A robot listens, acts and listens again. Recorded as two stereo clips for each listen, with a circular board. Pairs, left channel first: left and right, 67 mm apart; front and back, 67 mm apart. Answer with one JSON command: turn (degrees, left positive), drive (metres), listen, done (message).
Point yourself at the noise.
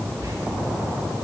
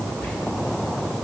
{"turn": -65}
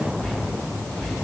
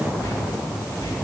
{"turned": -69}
{"done": "Found it: whispering, straight ahead."}